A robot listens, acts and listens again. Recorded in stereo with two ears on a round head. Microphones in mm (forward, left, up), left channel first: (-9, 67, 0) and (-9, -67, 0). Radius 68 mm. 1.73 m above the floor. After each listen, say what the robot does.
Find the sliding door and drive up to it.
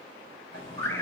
Turn 90° left.
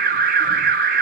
Keep listening.
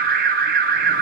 Keep listening.
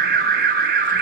I heard a sliding door from this way, but can't make it out now. I did not reach it.